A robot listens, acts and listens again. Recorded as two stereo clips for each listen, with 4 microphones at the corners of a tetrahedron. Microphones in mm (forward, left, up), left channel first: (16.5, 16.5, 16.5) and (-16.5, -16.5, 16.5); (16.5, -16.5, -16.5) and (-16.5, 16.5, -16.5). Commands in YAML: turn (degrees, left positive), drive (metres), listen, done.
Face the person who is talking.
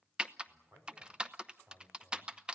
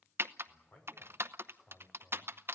turn: -95
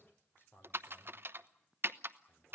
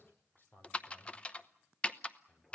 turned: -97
done: "Facing the man speaking, over 4 m away."